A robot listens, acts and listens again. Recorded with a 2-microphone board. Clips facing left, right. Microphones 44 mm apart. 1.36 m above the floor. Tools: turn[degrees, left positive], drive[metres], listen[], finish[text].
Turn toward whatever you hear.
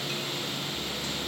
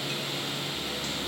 Action: listen[]
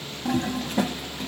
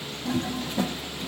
Thought: The toilet flushing: about 65° left or 115° left.
Action: turn[65]
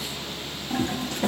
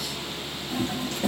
Thought: So it is at 50° left.
Action: turn[50]
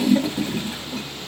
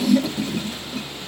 Thought: The toilet flushing is now 20° left.
Action: turn[20]
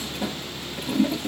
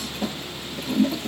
Action: finish[Found it: a toilet flushing, straight ahead, 1 to 2 m away.]